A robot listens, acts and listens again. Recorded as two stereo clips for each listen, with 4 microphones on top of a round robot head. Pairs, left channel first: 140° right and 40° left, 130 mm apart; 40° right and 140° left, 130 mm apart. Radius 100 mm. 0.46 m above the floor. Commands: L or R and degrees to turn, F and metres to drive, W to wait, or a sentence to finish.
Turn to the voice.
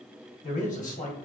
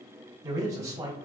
R150
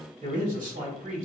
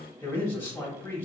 L35
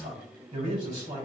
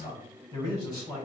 L20
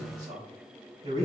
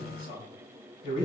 Found it: a man speaking, straight ahead, 2 to 4 m away.